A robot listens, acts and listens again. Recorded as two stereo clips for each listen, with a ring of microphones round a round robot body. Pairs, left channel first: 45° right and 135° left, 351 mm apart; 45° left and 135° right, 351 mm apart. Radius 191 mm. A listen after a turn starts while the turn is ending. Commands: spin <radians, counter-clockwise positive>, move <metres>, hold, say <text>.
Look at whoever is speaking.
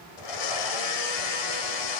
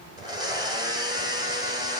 hold
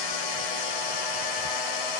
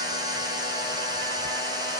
hold
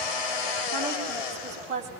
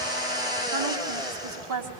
spin -2.71
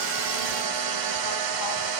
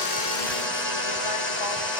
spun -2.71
hold
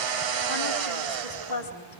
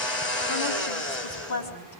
say Found it: a woman speaking, straight ahead, over 4 m away.